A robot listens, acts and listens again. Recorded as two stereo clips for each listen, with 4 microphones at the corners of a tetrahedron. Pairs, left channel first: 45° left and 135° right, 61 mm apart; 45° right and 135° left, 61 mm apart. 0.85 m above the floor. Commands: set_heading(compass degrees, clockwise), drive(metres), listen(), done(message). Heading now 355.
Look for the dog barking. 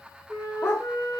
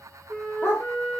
done("Facing the dog barking.")